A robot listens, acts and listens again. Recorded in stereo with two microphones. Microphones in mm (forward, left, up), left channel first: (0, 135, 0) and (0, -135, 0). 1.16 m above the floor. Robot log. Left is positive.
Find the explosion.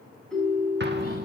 note: The explosion: about 40° right or 140° right.
cmd yaw -40
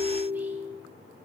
cmd idle
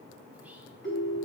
end: I heard an explosion, but can't make it out now. It was about straight ahead or 100° right.